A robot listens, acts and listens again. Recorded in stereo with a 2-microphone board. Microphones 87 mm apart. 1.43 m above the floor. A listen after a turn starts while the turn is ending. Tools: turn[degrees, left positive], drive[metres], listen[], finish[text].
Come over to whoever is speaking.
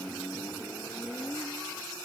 Action: listen[]
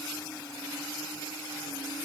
Action: listen[]
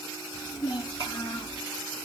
Thought: The child speaking: about 60° left or 120° left.
Action: turn[60]
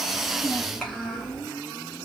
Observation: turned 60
Action: drive[1.0]
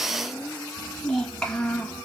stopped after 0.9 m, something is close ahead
Thought: The child speaking is now 10° left.
Action: turn[10]
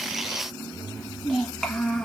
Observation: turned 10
Action: finish[Arrived at the child speaking, straight ahead.]